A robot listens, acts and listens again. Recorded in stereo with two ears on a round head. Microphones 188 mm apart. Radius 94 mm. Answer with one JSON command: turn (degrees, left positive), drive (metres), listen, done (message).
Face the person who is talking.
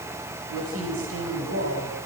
{"turn": -90}
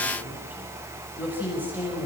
{"turn": -10}
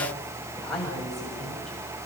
{"done": "Facing the woman speaking."}